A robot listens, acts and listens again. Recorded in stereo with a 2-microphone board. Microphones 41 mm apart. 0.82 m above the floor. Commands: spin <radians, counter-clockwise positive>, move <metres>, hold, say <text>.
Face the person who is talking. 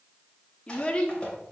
spin 0.52
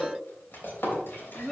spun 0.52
say Facing the child speaking, 1 to 2 m away.